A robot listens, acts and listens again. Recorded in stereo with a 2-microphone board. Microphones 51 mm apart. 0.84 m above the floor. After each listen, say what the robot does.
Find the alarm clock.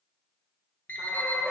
Turn 40° left.
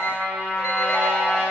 Keep listening.
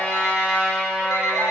Keep listening.
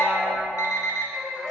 Turn 100° left.
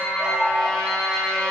Keep listening.
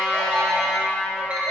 Keep listening.
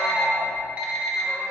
Turn 25° right.
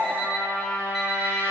Found it: an alarm clock, straight ahead.